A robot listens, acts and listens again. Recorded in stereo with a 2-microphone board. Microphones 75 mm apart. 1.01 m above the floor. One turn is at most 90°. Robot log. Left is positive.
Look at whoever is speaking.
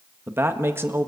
note: The man speaking: about 30° right or 150° right.
cmd yaw -30
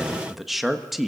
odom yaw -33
end: Found it: a man speaking, straight ahead, 1 to 2 m away.